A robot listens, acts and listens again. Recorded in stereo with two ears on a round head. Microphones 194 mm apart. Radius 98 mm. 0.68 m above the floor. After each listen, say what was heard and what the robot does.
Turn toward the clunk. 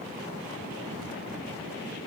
Keep listening.
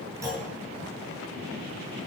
Turn 30° right.
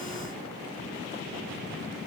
Keep listening.
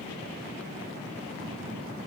I heard a clunk, but can't make it out now. It was about 15° left or 135° right.